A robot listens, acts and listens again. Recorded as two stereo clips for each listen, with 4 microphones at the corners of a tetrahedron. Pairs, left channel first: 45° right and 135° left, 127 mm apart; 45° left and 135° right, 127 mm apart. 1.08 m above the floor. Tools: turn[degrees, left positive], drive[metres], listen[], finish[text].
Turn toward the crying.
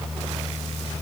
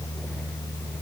Action: listen[]
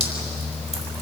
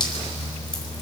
Action: listen[]
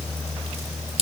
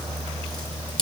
Action: finish[I can't make out crying, only dripping.]